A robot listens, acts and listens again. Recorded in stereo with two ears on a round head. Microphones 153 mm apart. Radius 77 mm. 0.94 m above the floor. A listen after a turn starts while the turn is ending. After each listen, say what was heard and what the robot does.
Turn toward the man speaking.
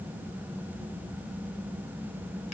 Keep listening.
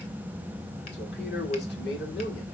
The man speaking: about 65° left or 115° left. Turn 65° left.
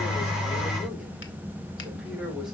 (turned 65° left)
Keep listening.
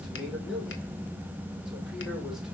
Keep listening.
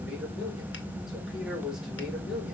Facing the man speaking.